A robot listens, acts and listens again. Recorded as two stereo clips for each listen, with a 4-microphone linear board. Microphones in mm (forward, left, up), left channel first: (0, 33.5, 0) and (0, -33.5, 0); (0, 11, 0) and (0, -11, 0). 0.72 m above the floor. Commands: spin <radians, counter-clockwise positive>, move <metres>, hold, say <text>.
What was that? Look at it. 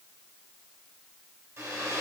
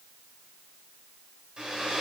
spin -0.79
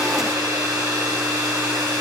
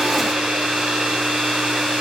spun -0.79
spin -1.57
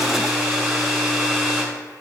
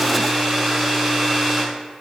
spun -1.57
say Found it: a hair dryer, straight ahead, 2 to 4 m away.